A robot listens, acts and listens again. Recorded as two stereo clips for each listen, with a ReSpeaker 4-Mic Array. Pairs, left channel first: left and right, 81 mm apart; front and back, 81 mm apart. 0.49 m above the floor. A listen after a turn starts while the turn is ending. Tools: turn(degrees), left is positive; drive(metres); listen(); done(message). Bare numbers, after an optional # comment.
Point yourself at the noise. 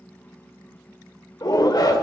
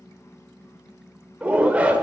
# The shout: 110° left.
turn(110)
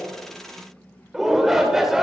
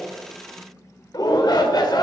done("Found it: a shout, straight ahead, 1 to 2 m away.")